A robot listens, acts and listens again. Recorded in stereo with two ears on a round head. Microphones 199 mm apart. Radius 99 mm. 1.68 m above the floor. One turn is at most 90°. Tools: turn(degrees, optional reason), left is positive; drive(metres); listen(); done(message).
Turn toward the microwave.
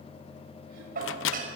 turn(degrees=65, reason="The microwave: about 65° left or 115° left.")
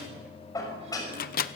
turn(degrees=45, reason="So it is at 45° left.")
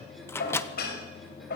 turn(degrees=10, reason="The microwave is now 10° left.")
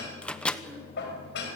done("Facing the microwave.")